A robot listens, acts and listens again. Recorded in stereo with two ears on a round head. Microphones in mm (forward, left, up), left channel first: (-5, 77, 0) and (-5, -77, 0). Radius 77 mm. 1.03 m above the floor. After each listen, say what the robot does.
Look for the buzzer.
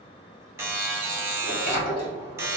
Turn 30° right.
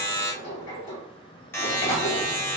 Turn 15° left.
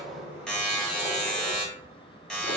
Found it: a buzzer, straight ahead, under 1 m away.